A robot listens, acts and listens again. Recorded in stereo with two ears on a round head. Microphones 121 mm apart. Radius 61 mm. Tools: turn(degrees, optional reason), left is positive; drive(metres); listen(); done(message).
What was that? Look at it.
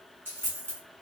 turn(degrees=-30)
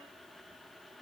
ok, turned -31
listen()
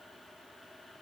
done("I heard a dropped coin, but can't make it out now. It was about 15° left or 135° right.")